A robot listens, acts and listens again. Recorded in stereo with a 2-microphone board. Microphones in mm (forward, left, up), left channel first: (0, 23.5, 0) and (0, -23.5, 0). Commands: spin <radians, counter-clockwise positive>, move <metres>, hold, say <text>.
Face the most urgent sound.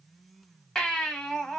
spin 0.52
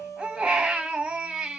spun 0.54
spin -0.35
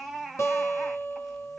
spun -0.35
say Facing the baby crying.